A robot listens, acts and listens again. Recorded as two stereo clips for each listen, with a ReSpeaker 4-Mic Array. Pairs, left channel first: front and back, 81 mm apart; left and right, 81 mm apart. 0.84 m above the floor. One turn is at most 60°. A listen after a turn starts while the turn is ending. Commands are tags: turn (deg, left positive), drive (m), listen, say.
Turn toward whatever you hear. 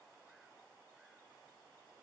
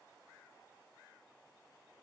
<listen/>
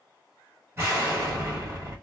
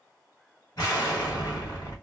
<turn deg="60"/>
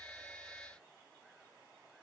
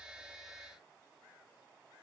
<turn deg="60"/>
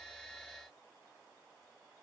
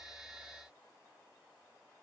<say>I heard an explosion from this way, but can't make it out now.</say>